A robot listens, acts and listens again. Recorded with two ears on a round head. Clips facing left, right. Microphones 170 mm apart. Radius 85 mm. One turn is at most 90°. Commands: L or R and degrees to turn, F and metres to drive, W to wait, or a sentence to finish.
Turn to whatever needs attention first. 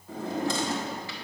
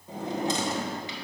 W
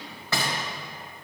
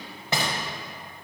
W
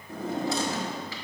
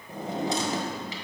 I can't make out anything urgent, only a drawer.